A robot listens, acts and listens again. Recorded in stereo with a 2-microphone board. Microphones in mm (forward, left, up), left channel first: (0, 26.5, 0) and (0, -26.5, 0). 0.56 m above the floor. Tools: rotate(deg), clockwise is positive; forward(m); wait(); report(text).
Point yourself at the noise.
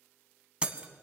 rotate(20)
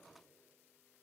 wait()
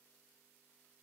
report("I heard breaking glass, but can't make it out now. It was about straight ahead or 140° right.")